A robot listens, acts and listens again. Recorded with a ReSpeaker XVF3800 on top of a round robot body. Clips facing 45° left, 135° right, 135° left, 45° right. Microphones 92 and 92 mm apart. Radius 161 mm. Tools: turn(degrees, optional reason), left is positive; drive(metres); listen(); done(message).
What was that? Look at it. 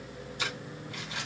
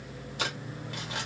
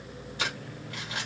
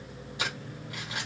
turn(degrees=-125, reason="The crumpling: 125° right.")
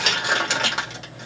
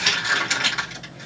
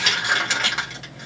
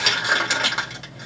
turn(degrees=30, reason="The crumpling is now 30° left.")
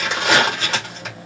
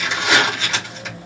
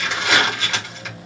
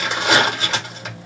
turn(degrees=10, reason="The crumpling is now 10° left.")
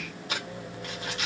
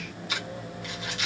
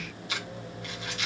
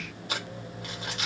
done("Facing the crumpling.")